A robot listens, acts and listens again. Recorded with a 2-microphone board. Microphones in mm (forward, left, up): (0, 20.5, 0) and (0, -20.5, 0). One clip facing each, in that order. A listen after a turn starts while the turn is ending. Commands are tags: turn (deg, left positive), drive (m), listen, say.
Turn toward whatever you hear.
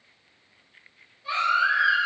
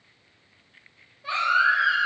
<turn deg="-90"/>
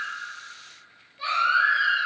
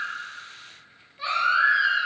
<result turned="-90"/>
<say>Facing the baby crying, 1 to 2 m away.</say>